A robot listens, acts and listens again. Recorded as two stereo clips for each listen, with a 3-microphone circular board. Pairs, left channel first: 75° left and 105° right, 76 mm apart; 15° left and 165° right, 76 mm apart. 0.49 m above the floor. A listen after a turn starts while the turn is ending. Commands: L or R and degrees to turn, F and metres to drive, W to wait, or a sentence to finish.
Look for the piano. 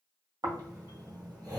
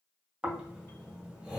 W
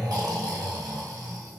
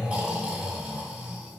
W
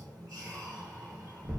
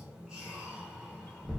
I can't make out a piano to turn to.